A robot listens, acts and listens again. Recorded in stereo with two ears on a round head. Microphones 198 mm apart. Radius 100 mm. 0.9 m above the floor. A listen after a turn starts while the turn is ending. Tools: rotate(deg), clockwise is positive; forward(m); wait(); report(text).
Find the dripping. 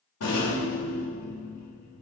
wait()
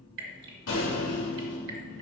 rotate(55)
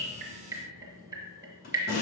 rotate(15)
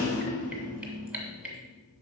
report("Found it: dripping, straight ahead, 1 to 2 m away.")